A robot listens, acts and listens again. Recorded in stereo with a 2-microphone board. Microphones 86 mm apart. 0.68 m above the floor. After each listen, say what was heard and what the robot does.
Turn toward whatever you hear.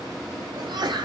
The sneeze: about 60° right or 120° right. Turn 60° right.
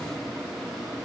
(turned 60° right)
Keep listening.
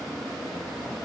I heard a sneeze, but can't make it out now. It was about straight ahead or 60° right.